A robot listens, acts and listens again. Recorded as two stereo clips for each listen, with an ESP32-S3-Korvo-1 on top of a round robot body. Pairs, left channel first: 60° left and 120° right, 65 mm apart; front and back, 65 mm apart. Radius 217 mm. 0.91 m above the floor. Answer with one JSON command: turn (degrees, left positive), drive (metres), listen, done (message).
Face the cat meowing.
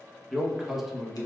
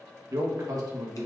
{"listen": true}
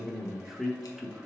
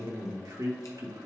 {"listen": true}
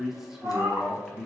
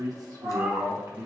{"turn": -170}
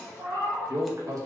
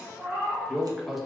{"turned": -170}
{"turn": -100}
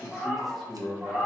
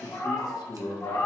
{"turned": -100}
{"turn": -40}
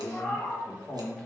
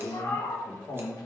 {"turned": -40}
{"turn": -20}
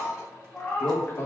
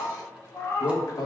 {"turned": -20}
{"done": "Facing the cat meowing."}